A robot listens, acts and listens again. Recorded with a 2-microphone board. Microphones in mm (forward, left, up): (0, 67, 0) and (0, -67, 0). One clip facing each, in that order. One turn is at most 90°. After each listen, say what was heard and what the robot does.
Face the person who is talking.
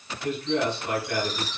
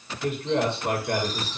The man speaking: about 75° right or 105° right. Turn 75° right.
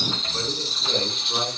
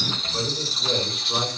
So it is at 15° right. Turn 15° right.
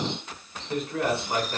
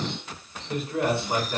Facing the man speaking.